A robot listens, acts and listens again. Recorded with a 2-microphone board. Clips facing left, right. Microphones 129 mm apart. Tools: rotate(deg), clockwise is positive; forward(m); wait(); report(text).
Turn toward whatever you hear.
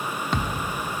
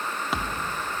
rotate(30)
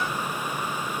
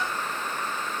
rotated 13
wait()
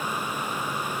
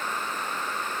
report("I heard a thud, but can't make it out now. It was about 10° left or 165° right.")